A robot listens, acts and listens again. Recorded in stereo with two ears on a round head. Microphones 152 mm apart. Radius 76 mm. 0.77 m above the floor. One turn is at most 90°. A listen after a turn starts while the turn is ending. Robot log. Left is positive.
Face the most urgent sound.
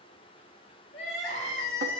cmd yaw +90
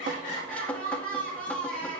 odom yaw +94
note: So it is at 10° left.
cmd yaw +10
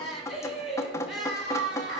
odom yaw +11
end: Facing the crying.